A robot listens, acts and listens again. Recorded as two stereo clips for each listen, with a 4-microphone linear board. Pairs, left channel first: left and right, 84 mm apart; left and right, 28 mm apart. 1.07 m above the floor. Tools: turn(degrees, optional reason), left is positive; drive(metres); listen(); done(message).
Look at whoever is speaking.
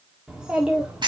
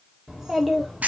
turn(degrees=-30)
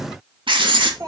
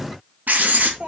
turn(degrees=-135, reason="So it is at 135° right.")
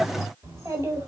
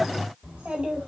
turn(degrees=-40, reason="The child speaking is now 40° right.")
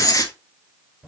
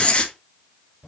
turn(degrees=-10, reason="The child speaking is now 10° right.")
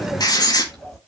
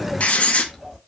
done("Found it: a child speaking, straight ahead.")